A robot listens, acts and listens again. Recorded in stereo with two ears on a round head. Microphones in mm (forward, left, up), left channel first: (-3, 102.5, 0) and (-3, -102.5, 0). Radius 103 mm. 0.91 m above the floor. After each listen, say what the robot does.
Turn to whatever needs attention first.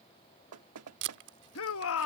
Turn 65° left.
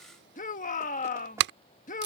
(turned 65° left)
Turn 35° left.
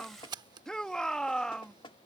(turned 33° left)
Found it: a shout, straight ahead.